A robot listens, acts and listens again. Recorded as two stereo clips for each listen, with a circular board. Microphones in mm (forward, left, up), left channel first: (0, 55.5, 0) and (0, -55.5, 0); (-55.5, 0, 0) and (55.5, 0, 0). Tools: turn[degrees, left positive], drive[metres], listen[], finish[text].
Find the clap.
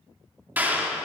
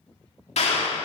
Thought: The clap: 165° right.
Action: turn[-165]
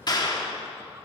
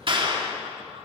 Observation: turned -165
Thought: The clap is now 40° left.
Action: turn[40]
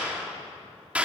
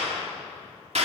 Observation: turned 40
Thought: The clap is now 10° right.
Action: turn[-10]
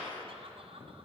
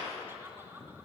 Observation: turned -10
Action: listen[]
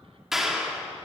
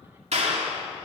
Action: finish[Found it: a clap, straight ahead.]